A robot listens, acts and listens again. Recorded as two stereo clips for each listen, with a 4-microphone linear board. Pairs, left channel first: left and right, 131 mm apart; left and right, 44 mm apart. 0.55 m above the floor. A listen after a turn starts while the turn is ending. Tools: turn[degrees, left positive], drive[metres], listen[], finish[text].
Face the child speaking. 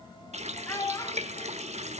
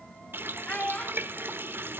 Thought: The child speaking: about 25° left or 155° left.
Action: turn[25]
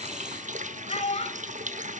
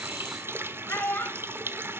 Thought: So it is at 125° left.
Action: turn[125]
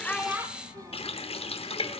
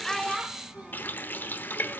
Action: listen[]
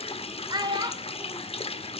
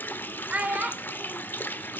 Thought: The child speaking is now 35° right.
Action: turn[-35]
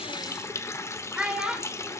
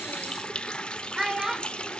Action: finish[Found it: a child speaking, straight ahead.]